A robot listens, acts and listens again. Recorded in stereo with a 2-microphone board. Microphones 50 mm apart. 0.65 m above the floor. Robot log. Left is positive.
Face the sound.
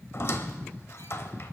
note: The squeak: about 55° left or 125° left.
cmd yaw +55
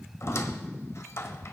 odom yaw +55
note: So it is at 65° left.
cmd yaw +65
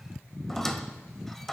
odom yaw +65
end: Found it: a squeak, straight ahead, under 1 m away.